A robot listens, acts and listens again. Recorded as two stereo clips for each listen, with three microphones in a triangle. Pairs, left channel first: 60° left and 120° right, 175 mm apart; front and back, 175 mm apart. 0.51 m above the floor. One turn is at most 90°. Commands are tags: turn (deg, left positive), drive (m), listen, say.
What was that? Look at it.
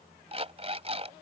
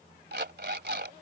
<turn deg="-90"/>
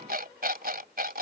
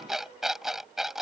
<turn deg="-90"/>
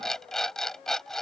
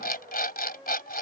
<turn deg="-25"/>
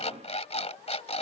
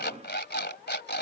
<turn deg="10"/>
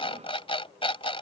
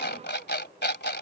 <say>Facing the alarm clock.</say>